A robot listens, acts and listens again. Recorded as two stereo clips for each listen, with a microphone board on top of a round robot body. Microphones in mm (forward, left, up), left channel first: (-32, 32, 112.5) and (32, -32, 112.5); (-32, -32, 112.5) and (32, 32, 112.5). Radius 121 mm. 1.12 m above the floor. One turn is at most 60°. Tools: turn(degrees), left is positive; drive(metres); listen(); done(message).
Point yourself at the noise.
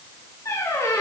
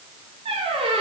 turn(degrees=60)
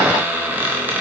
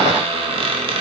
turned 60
turn(degrees=25)
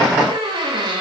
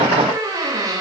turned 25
done("Facing the squeak.")